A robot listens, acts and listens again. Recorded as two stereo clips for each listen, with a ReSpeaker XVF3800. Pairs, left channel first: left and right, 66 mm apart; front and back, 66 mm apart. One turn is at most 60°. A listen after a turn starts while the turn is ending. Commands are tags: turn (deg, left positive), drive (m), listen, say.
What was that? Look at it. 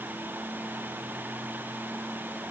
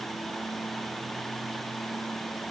<listen/>
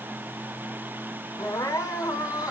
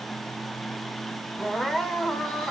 <turn deg="60"/>
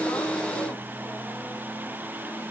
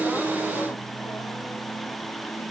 <turn deg="30"/>
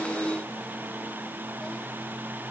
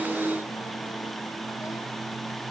<listen/>
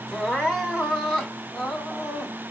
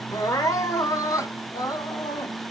<turn deg="10"/>
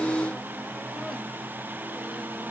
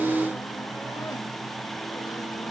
<listen/>
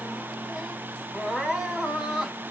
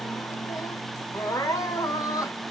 <say>Found it: crying, straight ahead.</say>